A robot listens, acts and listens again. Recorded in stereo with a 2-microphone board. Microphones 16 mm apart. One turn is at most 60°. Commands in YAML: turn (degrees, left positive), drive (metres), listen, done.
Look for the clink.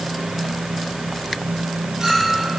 turn: -35
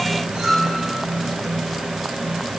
turn: -60
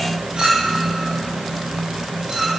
turn: -60
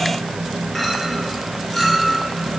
done: "Facing the clink, over 4 m away."